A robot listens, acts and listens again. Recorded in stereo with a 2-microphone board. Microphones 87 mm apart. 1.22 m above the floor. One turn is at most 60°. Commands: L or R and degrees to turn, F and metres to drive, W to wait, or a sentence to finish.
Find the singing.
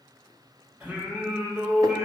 R30
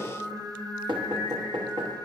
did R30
R60
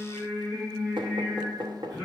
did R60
R60
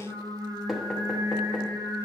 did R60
R60
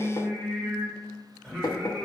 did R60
Found it: singing, straight ahead.